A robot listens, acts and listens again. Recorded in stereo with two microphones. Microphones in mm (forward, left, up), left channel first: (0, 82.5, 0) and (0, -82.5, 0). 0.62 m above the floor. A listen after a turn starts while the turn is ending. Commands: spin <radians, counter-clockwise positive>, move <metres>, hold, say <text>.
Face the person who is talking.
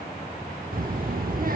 spin -1.05
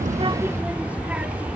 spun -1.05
spin -0.17
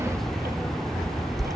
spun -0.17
say Found it: a child speaking, straight ahead.